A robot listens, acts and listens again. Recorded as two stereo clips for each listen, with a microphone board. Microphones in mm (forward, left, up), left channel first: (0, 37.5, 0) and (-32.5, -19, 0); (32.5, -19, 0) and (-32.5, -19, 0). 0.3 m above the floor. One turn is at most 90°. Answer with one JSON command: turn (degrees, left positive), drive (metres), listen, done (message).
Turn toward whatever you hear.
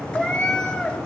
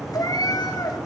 {"turn": -15}
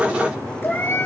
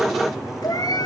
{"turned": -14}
{"done": "Facing the cat meowing, 2 to 4 m away."}